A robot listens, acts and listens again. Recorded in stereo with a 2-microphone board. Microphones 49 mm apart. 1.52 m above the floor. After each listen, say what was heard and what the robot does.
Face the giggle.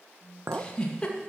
The giggle: about 20° left or 160° left. Turn 20° left.
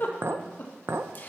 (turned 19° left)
So it is at 140° left. Turn 140° left.
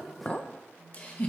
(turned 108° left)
The giggle is now 30° left. Turn 30° left.
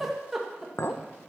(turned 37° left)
Found it: a giggle, straight ahead, 2 to 4 m away.